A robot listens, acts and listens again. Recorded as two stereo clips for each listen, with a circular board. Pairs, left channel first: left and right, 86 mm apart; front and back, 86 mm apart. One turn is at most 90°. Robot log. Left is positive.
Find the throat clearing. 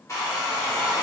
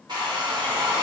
cmd idle
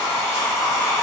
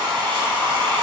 cmd idle
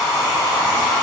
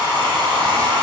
end: I can't make out throat clearing, only a hair dryer.